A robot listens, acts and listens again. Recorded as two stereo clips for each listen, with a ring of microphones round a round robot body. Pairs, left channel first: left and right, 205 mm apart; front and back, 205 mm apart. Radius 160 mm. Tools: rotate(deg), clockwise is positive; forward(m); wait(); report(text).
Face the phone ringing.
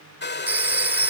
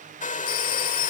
rotate(10)
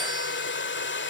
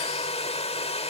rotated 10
wait()
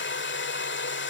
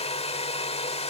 wait()
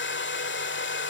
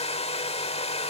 report("I heard a phone ringing from this way, but can't make it out now.")